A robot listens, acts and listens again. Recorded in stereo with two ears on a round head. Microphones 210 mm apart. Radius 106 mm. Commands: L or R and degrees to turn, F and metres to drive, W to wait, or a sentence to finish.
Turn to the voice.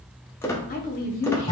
L40
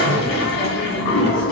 W
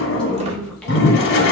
Found it: a woman speaking, straight ahead, 1 to 2 m away.